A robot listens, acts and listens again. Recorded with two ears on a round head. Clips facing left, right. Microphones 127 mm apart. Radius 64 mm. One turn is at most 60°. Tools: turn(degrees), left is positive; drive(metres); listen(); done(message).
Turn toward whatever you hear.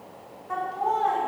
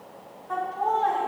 turn(degrees=30)
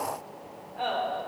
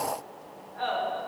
turn(degrees=60)
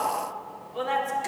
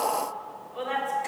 turn(degrees=60)
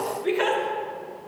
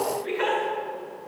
turn(degrees=60)
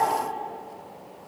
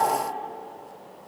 listen()
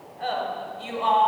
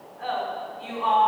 turn(degrees=30)
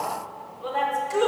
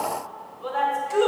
done("Found it: laughter, straight ahead, 1 to 2 m away.")